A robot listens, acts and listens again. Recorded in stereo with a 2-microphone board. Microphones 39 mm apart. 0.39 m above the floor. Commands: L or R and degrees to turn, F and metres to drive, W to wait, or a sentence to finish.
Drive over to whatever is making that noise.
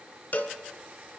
L45
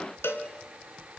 L90
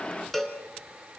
L10
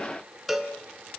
F1.0
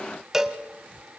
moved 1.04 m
R10
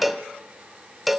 F1.0
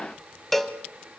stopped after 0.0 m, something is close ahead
L10
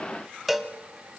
I am next to the cowbell.